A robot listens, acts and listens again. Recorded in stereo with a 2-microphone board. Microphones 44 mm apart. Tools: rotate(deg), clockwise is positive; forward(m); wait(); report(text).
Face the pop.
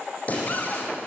rotate(-35)
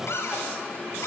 wait()
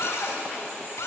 report("I heard a pop, but can't make it out now. It was about straight ahead or 110° left.")